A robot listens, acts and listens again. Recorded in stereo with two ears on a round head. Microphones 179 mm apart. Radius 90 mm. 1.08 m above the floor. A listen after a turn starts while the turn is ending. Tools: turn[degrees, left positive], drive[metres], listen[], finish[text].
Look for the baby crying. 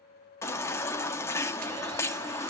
Action: turn[30]
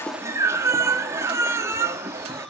Thought: So it is at 15° right.
Action: turn[-15]
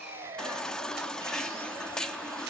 Action: finish[Facing the baby crying, 1 to 2 m away.]